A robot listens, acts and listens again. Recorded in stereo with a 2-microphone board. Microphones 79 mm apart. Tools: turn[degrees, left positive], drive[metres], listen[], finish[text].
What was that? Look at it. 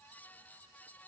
Action: listen[]
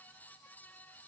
Action: listen[]
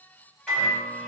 Action: turn[30]
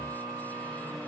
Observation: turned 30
Thought: So it is at 145° left.
Action: turn[145]
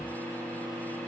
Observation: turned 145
Thought: The microwave is now 10° right.
Action: turn[-10]
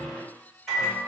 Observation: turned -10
Action: finish[Found it: a microwave, straight ahead, 1 to 2 m away.]